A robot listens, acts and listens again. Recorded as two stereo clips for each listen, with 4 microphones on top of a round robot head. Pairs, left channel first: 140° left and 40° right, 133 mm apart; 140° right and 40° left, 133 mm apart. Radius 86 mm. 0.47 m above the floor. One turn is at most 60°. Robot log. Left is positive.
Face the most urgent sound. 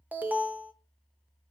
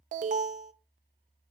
note: The alarm: 40° left.
cmd yaw +40
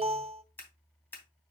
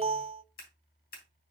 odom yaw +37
end: Facing the alarm.